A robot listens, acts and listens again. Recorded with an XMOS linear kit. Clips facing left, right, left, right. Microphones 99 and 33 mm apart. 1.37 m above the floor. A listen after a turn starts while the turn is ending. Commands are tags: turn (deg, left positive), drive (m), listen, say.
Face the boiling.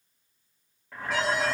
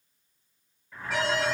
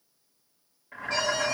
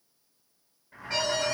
<turn deg="90"/>
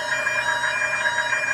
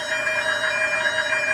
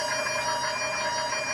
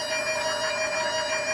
<listen/>
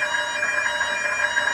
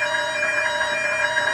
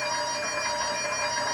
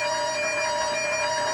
<listen/>
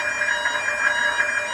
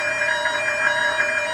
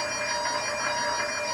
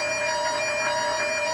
<say>I heard boiling from this way, but can't make it out now.</say>